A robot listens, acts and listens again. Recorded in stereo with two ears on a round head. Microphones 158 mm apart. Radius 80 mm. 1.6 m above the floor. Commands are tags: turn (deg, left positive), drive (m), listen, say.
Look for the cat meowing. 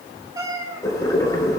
<turn deg="-25"/>
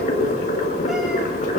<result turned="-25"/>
<listen/>
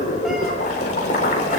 <listen/>
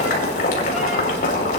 <say>I heard a cat meowing, but can't make it out now. It was about straight ahead or 130° right.</say>